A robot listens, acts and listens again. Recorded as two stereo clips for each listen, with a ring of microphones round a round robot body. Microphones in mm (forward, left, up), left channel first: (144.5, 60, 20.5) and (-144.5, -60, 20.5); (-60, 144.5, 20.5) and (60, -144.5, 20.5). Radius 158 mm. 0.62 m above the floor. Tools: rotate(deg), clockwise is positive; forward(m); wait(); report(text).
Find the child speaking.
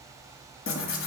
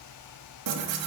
wait()
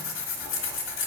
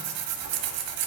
wait()
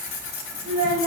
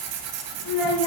rotate(-135)
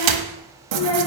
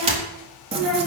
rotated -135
rotate(-25)
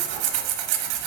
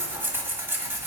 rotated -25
wait()
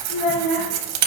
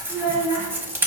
rotate(-10)
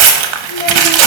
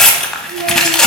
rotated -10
wait()
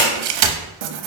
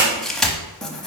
wait()
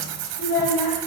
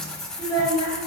report("Facing the child speaking, 2 to 4 m away.")